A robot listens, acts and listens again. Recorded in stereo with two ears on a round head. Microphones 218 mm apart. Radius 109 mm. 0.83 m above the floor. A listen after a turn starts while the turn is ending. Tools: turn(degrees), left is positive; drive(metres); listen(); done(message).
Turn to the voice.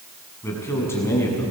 turn(degrees=30)
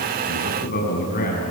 turn(degrees=140)
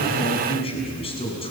turn(degrees=25)
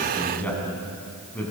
done("Found it: a man speaking, straight ahead.")